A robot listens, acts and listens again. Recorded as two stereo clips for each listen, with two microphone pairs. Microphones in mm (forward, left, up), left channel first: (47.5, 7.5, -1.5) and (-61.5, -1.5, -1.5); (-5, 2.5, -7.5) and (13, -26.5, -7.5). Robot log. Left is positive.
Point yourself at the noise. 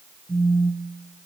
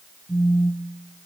note: The phone buzzing: 125° right.
cmd yaw -125
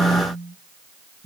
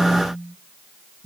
note: The phone buzzing is now 10° left.
cmd yaw +10
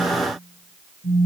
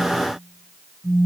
end: Found it: a phone buzzing, straight ahead.